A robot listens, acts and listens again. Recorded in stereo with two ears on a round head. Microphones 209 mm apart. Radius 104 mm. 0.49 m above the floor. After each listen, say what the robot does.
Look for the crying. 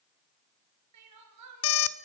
Turn 90° right.
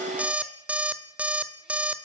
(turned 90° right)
Keep listening.
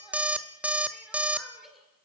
Found it: crying, straight ahead, 2 to 4 m away.